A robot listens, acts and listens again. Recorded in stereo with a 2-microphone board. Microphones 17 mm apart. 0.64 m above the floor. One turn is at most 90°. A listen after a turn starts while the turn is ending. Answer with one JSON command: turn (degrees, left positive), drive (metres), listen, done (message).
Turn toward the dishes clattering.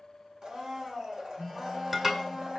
{"turn": -25}
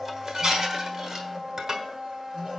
{"turn": -90}
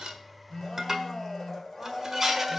{"turn": -20}
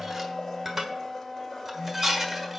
{"turn": -10}
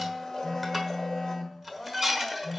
{"done": "Found it: dishes clattering, straight ahead, 1 to 2 m away."}